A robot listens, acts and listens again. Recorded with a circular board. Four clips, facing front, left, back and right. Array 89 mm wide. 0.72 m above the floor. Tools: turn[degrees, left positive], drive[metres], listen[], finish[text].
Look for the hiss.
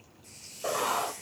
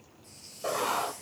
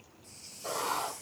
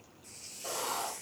Thought: The hiss: 25° right.
Action: turn[-25]
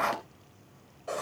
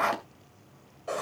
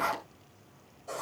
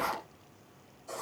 Action: listen[]
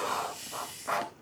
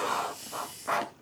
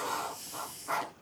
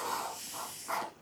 Action: finish[Found it: a hiss, straight ahead, 2 to 4 m away.]